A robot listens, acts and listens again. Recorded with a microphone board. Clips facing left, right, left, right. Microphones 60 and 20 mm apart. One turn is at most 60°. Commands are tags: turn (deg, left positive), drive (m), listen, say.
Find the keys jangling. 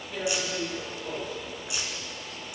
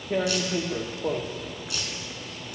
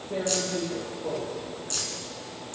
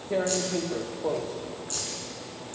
<turn deg="20"/>
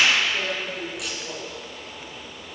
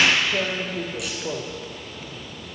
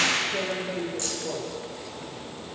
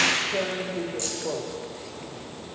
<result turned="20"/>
<listen/>
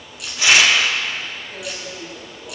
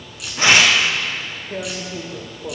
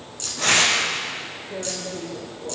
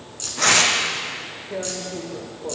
<say>Facing the keys jangling.</say>